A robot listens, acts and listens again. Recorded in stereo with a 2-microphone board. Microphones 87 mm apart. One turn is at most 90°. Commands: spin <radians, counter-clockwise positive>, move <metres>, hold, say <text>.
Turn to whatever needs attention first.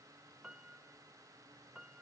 hold
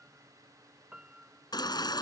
spin 0.96
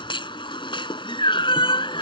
spin 1.22
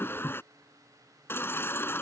spin 0.44
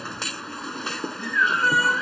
say Facing the baby crying.